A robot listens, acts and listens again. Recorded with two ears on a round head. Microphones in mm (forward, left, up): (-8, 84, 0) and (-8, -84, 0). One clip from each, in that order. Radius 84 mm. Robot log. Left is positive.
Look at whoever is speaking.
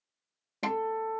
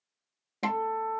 cmd idle
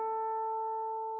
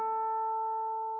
cmd idle
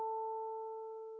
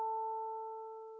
end: I can't make out anyone speaking to turn to.